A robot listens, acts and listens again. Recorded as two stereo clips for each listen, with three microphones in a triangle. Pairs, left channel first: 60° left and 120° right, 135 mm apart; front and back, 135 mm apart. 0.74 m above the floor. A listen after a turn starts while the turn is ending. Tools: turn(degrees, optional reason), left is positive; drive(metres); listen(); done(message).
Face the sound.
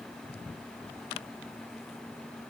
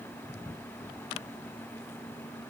listen()
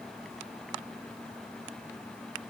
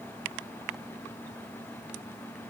listen()
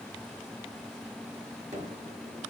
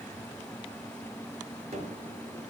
turn(degrees=-145, reason="The gunshot: 145° right.")
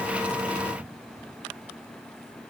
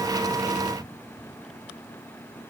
done("I heard a gunshot from this way, but can't make it out now.")